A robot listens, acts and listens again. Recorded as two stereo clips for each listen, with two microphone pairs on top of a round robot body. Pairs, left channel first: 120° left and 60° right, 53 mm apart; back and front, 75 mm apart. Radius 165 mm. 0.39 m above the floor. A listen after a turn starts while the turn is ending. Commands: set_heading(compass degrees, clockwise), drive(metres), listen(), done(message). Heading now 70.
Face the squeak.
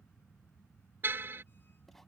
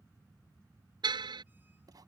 listen()
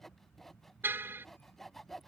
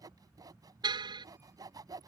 listen()
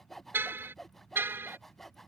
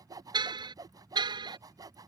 done("I can't make out a squeak, only sawing and a car horn.")